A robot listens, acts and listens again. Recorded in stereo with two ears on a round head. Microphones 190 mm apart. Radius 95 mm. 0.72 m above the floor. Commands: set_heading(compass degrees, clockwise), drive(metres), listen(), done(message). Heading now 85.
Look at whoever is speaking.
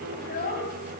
set_heading(40)
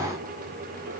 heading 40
listen()
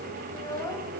set_heading(25)
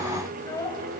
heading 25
set_heading(10)
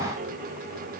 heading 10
listen()
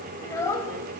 set_heading(355)
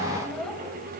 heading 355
listen()
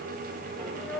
done("Found it: a child speaking, straight ahead.")